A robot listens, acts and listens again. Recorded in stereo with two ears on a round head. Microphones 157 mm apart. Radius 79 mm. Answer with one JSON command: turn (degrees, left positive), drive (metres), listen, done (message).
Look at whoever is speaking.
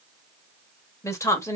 {"turn": 15}
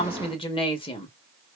{"turn": 150}
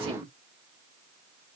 {"turn": -30}
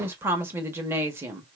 {"turn": -15}
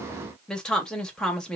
{"done": "Facing the woman speaking."}